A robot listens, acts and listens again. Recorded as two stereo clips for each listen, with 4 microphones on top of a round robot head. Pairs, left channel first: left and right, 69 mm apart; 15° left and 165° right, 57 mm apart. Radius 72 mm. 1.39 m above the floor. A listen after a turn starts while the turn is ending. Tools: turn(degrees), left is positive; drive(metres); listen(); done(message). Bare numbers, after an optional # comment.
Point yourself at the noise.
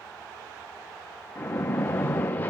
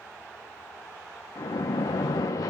# The splash: 30° left.
turn(30)
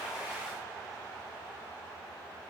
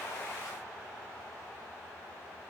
done("I heard a splash from this way, but can't make it out now.")